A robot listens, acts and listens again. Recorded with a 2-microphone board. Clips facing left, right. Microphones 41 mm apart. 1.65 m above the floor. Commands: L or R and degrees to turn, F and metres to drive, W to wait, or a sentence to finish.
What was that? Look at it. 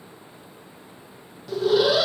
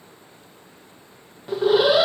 R30
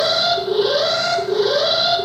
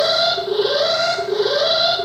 Found it: an alarm, straight ahead.